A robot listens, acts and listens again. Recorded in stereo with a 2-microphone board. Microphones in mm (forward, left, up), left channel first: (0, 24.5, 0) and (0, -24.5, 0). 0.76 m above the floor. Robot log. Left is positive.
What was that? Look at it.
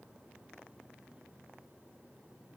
cmd idle
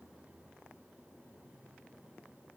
cmd idle
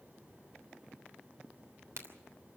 note: The crack: about 75° right or 105° right.
cmd yaw -75
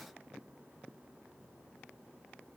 cmd idle
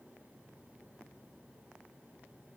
end: I heard a crack, but can't make it out now. It was about straight ahead or 30° right.